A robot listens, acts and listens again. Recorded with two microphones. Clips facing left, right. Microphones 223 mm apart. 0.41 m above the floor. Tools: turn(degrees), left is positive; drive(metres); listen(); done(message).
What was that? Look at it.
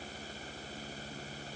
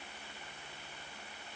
listen()
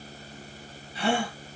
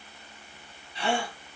turn(degrees=35)
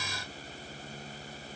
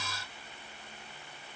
listen()
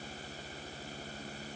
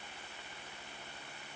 done("I heard a gasp, but can't make it out now. It was about straight ahead or 110° left.")